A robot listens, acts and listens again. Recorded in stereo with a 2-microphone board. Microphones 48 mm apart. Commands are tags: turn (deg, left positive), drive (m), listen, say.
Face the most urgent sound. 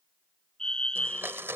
<turn deg="20"/>
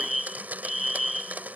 <say>Found it: a fire alarm, straight ahead.</say>